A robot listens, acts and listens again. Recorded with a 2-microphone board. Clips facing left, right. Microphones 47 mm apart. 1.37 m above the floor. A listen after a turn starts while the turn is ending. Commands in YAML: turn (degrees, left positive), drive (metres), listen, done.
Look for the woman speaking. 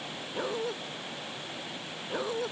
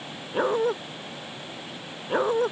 listen: true
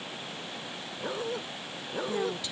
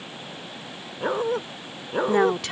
turn: -65
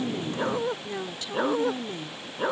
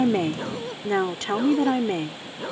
turn: -60
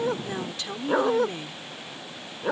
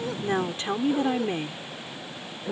turn: -30
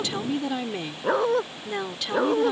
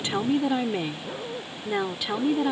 turn: -10
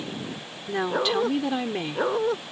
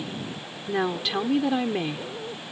done: "Found it: a woman speaking, straight ahead."